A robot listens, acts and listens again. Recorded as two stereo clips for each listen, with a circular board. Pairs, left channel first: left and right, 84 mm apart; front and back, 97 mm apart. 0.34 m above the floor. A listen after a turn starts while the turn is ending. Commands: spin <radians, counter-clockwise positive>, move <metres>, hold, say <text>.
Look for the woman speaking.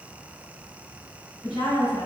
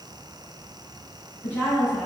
spin 1.13
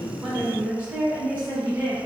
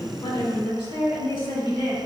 spin -0.35
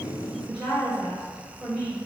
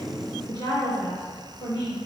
say Facing the woman speaking, 2 to 4 m away.